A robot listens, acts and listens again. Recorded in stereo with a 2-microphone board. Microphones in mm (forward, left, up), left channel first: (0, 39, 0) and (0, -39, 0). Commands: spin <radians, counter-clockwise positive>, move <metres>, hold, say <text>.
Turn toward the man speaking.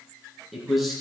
spin -0.52
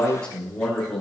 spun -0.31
spin 0.52
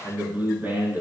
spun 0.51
spin -0.44
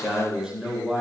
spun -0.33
spin -0.17
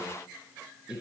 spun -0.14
say Found it: a man speaking, straight ahead.